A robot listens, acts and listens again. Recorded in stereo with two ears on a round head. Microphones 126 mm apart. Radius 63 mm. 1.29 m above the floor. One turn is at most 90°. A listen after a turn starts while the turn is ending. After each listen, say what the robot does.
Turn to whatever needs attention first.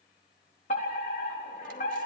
Turn 55° left.
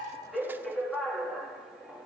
Found it: a fire alarm, straight ahead.